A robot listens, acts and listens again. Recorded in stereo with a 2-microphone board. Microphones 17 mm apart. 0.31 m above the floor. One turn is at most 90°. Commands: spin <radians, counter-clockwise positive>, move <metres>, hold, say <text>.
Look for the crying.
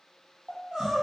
spin -1.22
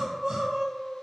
spin -0.70
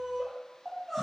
say Found it: crying, straight ahead.